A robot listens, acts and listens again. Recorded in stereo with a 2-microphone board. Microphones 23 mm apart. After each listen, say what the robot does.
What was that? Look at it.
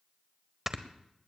Turn 30° right.
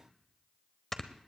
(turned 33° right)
Turn 25° left.
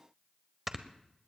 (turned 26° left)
Facing the snoring, under 1 m away.